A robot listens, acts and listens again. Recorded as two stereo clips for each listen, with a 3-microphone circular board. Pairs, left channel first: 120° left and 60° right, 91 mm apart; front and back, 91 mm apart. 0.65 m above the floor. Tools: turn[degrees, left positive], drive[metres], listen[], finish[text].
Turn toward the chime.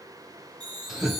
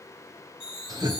Thought: The chime: 100° right.
Action: turn[-100]
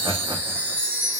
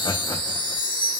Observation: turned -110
Thought: The chime is now 15° left.
Action: turn[15]
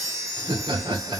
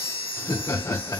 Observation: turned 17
Action: finish[Facing the chime, 2 to 4 m away.]